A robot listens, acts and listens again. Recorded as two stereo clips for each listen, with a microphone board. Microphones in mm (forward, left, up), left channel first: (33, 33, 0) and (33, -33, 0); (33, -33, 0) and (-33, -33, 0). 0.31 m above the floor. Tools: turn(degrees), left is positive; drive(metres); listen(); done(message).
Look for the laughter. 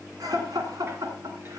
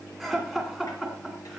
turn(degrees=-90)
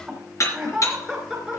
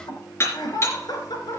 done("Found it: laughter, straight ahead.")